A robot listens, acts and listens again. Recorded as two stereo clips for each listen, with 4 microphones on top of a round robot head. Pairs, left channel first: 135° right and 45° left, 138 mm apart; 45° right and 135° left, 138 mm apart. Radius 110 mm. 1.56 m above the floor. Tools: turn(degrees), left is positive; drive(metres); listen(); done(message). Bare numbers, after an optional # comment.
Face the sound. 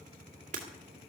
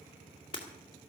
# The breaking glass: 10° left.
turn(10)
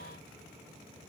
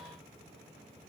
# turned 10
done("I heard breaking glass from this way, but can't make it out now.")